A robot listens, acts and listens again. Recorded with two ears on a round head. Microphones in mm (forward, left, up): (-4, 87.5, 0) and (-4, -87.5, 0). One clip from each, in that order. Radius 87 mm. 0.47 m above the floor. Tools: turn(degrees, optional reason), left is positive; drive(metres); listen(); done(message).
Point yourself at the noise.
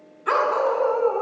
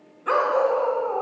turn(degrees=15, reason="The dog barking: about 15° left or 165° left.")
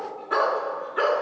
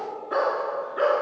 turn(degrees=30, reason="The dog barking: about 30° left or 150° left.")
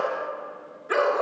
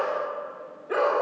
turn(degrees=120, reason="So it is at 120° left.")
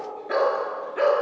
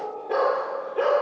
turn(degrees=55, reason="The dog barking is now 55° left.")
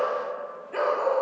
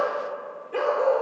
turn(degrees=15, reason="The dog barking is now 15° left.")
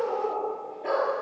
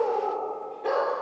done("Facing the dog barking, 2 to 4 m away.")